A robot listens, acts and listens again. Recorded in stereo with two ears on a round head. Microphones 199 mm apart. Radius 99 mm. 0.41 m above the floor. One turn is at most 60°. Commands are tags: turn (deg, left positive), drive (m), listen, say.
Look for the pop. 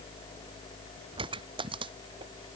<turn deg="-25"/>
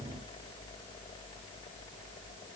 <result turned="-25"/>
<listen/>
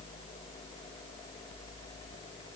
<say>I heard a pop, but can't make it out now. It was about straight ahead or 130° right.</say>